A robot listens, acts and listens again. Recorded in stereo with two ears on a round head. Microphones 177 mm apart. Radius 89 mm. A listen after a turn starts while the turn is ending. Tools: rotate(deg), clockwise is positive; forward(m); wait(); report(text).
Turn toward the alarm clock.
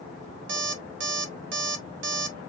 rotate(65)
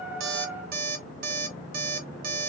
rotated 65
rotate(50)
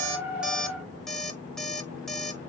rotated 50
report("Found it: an alarm clock, straight ahead.")